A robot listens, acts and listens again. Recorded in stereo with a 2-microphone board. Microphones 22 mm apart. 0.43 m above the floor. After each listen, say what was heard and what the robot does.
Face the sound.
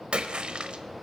The splash: about 55° right or 125° right. Turn 55° right.
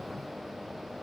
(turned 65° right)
Keep listening.
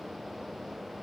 I heard a splash, but can't make it out now. It was about 10° left or 60° right.